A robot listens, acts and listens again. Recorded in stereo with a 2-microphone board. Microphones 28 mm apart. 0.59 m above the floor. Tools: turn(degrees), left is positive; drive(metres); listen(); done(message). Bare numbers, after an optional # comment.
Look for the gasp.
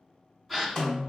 turn(30)
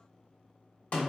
listen()
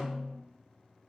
done("I heard a gasp, but can't make it out now. It was about 30° right or 150° left.")